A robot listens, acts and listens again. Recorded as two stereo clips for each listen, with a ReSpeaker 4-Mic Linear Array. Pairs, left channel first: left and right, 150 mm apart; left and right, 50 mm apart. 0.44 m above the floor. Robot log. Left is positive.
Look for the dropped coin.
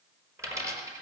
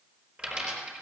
note: The dropped coin: about 20° right or 160° right.
cmd yaw -20
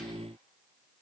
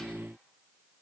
cmd idle
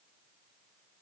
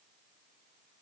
end: I heard a dropped coin, but can't make it out now. It was about straight ahead or 140° right.